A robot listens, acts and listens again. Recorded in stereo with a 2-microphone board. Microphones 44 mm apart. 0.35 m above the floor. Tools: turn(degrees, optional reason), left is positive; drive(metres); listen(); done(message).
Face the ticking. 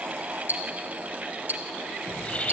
turn(degrees=-45, reason="The ticking: about 45° right or 135° right.")
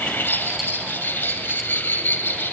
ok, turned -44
listen()
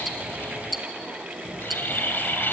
done("Facing the ticking.")